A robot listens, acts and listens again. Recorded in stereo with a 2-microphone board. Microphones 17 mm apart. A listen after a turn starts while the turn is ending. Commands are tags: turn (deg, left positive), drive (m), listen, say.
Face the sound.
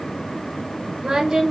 <turn deg="-60"/>
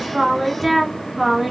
<turn deg="-15"/>
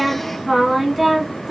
<turn deg="-15"/>
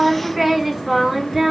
<turn deg="-15"/>
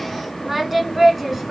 <turn deg="-10"/>
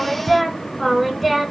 <say>Found it: singing, straight ahead, 1 to 2 m away.</say>